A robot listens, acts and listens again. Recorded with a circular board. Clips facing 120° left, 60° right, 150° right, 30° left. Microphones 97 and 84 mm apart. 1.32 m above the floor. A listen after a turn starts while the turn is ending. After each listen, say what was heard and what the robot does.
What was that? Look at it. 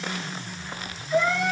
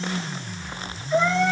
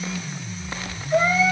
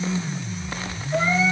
The cat meowing: 115° right. Turn 115° right.
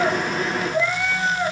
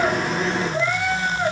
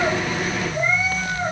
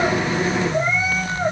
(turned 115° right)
The cat meowing is now 15° left. Turn 15° left.
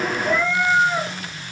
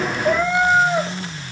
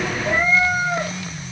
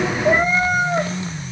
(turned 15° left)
Found it: a cat meowing, straight ahead.